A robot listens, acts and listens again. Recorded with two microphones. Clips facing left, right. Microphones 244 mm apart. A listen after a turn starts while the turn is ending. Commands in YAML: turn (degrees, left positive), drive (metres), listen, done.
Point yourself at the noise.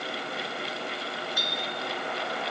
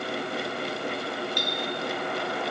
turn: 30
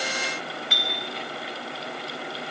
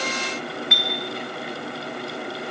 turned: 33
turn: 140
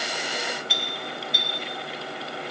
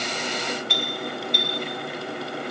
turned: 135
done: "Found it: a clink, straight ahead, 1 to 2 m away."